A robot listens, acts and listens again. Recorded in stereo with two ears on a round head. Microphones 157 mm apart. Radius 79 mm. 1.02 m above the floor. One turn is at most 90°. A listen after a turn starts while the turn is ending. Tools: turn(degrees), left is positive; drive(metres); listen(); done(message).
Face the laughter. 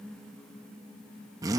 listen()
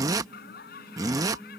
turn(degrees=60)
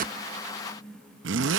listen()
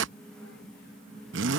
listen()
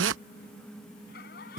turn(degrees=60)
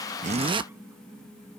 listen()
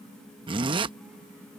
listen()
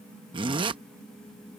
done("Facing where the laughter came from. I can't hear it now.")